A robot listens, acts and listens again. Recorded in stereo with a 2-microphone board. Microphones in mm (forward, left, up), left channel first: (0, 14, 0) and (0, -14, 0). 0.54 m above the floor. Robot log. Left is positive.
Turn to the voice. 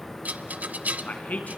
note: The man speaking: about 70° left or 110° left.
cmd yaw +70
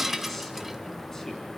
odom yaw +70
cmd idle
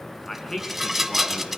note: So it is at 20° left.
cmd yaw +20
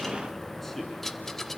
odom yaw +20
cmd idle
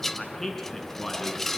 note: The man speaking is now 15° left.
cmd yaw +15
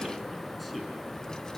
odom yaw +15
cmd idle
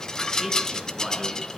end: Facing the man speaking.